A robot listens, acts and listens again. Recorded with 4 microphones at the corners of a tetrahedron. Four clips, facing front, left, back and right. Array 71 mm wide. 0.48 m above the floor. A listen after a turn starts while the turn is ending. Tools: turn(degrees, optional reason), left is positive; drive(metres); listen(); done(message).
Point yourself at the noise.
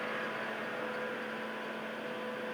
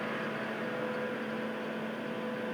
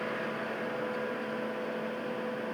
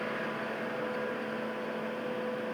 listen()
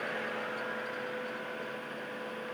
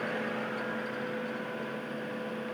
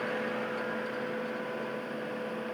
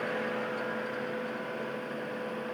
listen()
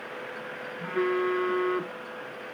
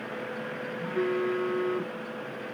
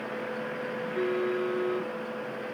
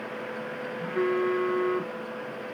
turn(degrees=-25, reason="The phone buzzing: 25° right.")
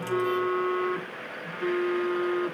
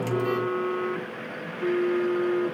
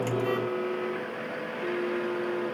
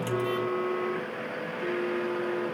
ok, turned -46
turn(degrees=20, reason="The phone buzzing is now 20° left.")
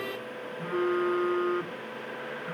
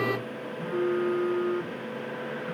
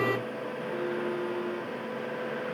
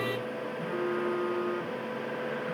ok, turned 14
done("Facing the phone buzzing.")